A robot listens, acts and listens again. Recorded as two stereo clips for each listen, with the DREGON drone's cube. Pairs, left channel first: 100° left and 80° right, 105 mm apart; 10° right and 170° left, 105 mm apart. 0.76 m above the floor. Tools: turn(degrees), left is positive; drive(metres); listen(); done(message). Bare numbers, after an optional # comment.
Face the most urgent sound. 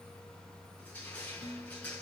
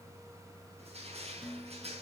listen()
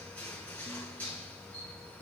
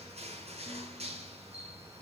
listen()
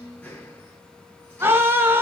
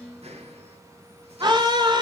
# The scream: 145° right.
turn(-145)
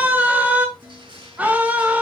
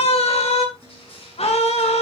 done("Found it: a scream, straight ahead, 2 to 4 m away.")